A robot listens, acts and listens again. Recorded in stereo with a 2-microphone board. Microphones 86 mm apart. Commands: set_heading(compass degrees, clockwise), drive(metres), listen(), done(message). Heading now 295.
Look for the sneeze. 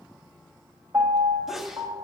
set_heading(265)
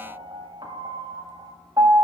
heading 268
listen()
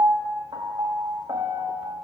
done("I heard a sneeze, but can't make it out now. It was about 30° right or 155° left.")